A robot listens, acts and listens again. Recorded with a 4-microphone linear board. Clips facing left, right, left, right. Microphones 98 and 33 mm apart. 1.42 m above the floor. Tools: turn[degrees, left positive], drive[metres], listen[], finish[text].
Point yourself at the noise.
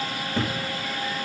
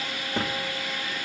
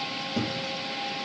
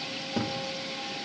Thought: The thud: about 25° right or 155° right.
Action: turn[-25]
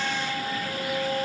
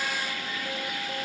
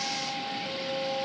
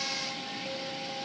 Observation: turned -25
Action: listen[]
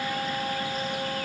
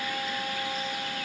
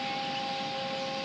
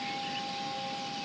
Action: finish[I heard a thud, but can't make it out now. It was about straight ahead or 130° right.]